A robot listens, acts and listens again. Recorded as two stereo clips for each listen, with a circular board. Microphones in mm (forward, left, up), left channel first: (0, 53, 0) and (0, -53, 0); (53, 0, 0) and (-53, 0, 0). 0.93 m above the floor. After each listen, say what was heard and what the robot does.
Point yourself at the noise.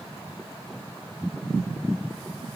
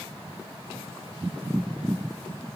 Keep listening.
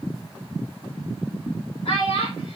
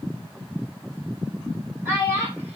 The child speaking: 115° left. Turn 115° left.
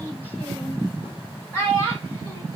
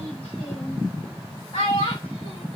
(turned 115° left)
The child speaking is now 20° left. Turn 20° left.
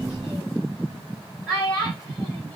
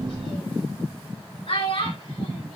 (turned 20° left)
Facing the child speaking.